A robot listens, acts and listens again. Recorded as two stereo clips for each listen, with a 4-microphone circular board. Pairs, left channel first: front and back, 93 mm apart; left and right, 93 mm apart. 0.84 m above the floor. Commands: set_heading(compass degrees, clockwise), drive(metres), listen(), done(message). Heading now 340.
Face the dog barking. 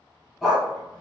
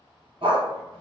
set_heading(65)
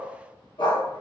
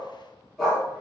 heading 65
done("Facing the dog barking, 1 to 2 m away.")